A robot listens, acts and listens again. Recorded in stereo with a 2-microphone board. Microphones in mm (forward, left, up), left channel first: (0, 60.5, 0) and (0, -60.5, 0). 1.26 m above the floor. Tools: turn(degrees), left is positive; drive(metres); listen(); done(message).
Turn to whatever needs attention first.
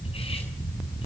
listen()
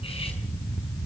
listen()
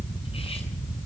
done("I can't make out anything urgent to turn to.")